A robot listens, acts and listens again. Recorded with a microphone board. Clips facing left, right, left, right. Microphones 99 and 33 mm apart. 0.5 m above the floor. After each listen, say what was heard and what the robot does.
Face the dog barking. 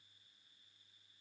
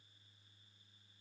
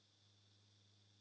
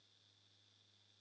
Keep listening.
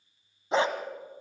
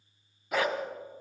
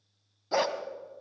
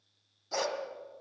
The dog barking: about 30° left or 150° left. Turn 30° left.
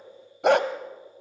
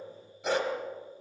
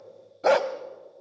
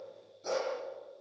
So it is at 100° left. Turn 100° left.
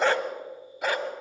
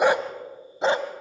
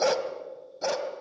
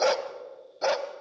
The dog barking is now 30° right. Turn 30° right.
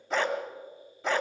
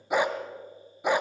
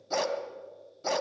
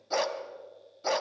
The dog barking is now 15° right. Turn 15° right.
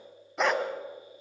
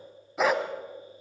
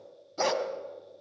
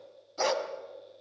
Found it: a dog barking, straight ahead, 1 to 2 m away.